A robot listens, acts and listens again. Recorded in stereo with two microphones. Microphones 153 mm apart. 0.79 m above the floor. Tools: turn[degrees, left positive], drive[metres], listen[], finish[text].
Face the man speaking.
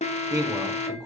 Thought: The man speaking: about 25° right or 155° right.
Action: turn[-25]
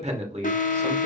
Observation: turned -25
Thought: So it is at 130° right.
Action: turn[-130]
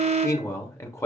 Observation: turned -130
Thought: The man speaking is now 20° left.
Action: turn[20]
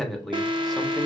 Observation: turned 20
Action: finish[Facing the man speaking, 1 to 2 m away.]